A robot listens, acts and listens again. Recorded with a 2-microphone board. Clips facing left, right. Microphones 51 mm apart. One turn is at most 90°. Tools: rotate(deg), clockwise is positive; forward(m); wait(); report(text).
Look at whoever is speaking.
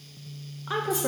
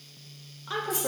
rotate(-20)
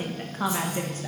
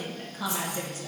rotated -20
rotate(-90)
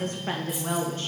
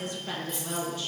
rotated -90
rotate(-45)
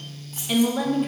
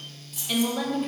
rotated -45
rotate(-10)
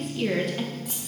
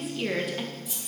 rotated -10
report("Facing the woman speaking, under 1 m away.")